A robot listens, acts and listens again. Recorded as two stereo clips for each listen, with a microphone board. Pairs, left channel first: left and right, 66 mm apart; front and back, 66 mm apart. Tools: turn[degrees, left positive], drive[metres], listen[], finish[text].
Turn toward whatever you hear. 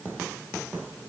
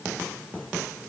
Action: listen[]
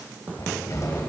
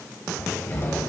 Thought: The cupboard door: 55° left.
Action: turn[55]
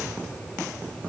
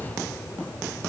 Thought: The cupboard door is now 10° left.
Action: turn[10]
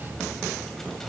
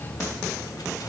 Action: finish[Facing the cupboard door, 1 to 2 m away.]